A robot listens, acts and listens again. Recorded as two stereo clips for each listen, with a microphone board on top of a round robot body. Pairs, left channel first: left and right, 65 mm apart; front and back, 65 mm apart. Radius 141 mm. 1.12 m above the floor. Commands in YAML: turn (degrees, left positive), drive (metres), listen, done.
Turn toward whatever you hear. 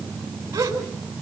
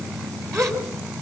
turn: -140
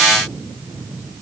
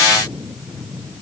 done: "Facing where the gasp came from. I can't hear it now."